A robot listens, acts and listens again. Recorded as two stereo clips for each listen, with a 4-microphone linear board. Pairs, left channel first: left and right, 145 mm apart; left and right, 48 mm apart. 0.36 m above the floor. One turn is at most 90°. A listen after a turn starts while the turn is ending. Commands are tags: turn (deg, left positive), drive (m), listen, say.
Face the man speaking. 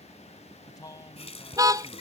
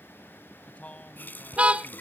<turn deg="30"/>
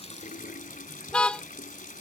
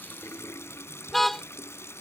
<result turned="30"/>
<listen/>
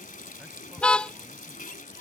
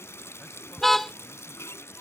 <listen/>
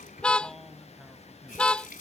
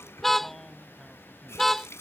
<say>I heard a man speaking, but can't make it out now. It was about straight ahead or 120° left.</say>